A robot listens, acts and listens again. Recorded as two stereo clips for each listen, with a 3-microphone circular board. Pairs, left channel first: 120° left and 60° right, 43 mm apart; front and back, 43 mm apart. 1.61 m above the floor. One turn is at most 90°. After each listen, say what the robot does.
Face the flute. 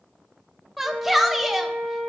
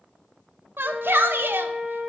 Turn 65° right.
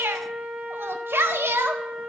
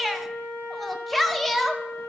Turn 10° right.
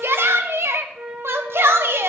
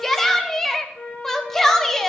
Found it: a flute, straight ahead, over 4 m away.